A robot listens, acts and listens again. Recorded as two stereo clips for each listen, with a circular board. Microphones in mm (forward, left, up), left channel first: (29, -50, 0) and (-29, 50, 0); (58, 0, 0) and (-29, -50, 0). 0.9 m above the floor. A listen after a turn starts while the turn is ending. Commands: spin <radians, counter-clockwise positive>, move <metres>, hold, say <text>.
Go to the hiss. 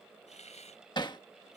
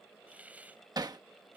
spin -1.31
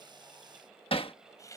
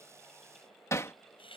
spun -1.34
move 1.0
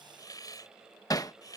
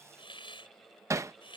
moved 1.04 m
move 1.0
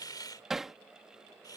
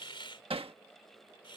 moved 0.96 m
move 1.0
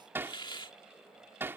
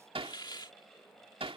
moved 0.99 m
spin -0.26
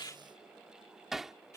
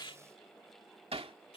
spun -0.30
move 1.0
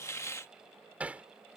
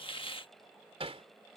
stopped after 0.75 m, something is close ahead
say I am next to the hiss.